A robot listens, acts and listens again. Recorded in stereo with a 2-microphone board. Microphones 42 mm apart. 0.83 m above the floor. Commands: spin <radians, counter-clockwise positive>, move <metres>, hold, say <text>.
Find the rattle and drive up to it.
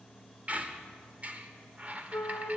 hold
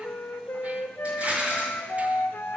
spin -0.52
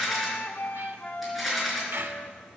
move 1.0
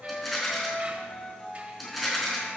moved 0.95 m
move 1.0
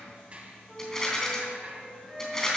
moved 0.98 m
spin 0.26
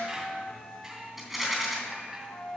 move 1.0
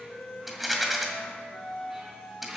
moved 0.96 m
move 1.0
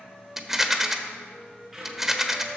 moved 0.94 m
spin -0.17
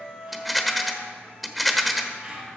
move 1.0
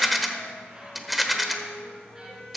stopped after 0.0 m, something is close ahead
say I am next to the rattle.